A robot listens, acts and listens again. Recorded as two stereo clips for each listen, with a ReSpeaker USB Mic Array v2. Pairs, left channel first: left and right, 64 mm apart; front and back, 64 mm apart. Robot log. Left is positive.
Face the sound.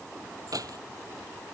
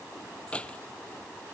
note: The keys jangling: 70° right.
cmd yaw -70
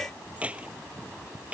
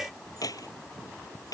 note: The keys jangling is now 20° right.
cmd yaw -20
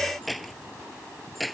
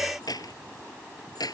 end: Facing the keys jangling.